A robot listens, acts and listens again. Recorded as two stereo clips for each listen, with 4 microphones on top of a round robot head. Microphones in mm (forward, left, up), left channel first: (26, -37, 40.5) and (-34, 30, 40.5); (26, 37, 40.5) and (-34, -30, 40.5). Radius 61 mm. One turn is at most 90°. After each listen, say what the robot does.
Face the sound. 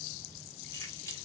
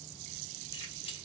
Keep listening.
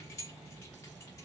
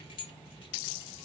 Turn 10° left.
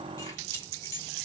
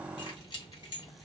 Found it: keys jangling, straight ahead.